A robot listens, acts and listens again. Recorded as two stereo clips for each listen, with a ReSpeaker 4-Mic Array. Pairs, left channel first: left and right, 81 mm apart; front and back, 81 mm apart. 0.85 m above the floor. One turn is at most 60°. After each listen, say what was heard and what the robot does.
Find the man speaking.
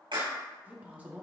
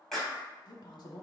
The man speaking: 15° right. Turn 15° right.
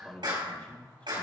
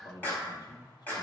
The man speaking is now 20° left. Turn 20° left.
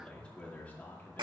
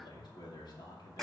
The man speaking is now 25° left. Turn 25° left.
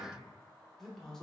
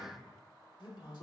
Found it: a man speaking, straight ahead, 2 to 4 m away.